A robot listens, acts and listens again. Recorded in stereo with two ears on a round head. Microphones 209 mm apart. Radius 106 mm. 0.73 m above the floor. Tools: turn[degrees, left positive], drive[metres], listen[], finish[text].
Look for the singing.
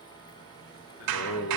Thought: The singing: about 50° left or 130° left.
Action: turn[50]
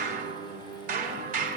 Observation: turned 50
Action: finish[Found it: singing, straight ahead, 2 to 4 m away.]